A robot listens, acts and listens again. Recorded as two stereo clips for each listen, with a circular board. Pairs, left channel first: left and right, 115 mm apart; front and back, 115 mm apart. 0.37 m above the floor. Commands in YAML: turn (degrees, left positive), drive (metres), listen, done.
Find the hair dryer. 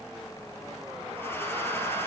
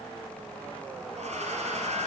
turn: 165
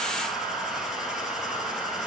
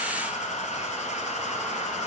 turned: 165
done: "Facing the hair dryer."